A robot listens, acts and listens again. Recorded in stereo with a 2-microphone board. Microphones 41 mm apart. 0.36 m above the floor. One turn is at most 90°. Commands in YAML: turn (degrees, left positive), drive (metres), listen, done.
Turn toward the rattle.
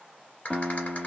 turn: 40
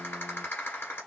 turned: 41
turn: 90
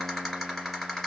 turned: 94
turn: 10
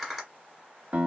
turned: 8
done: "Facing the rattle, 1 to 2 m away."